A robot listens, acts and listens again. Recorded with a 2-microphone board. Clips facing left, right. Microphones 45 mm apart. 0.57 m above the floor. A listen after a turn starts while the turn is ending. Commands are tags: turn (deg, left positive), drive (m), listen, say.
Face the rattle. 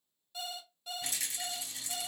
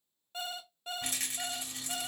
<turn deg="-50"/>
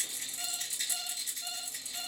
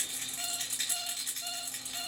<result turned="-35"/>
<turn deg="-95"/>
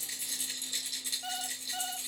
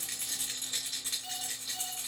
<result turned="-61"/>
<turn deg="-30"/>
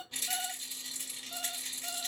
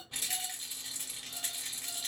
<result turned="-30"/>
<say>Found it: a rattle, straight ahead, 2 to 4 m away.</say>